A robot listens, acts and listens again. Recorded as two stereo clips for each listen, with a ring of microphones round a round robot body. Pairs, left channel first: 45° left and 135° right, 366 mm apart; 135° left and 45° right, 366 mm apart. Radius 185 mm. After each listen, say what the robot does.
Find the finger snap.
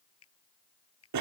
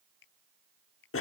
Turn 100° left.
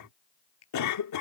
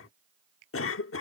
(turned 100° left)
Facing the finger snap.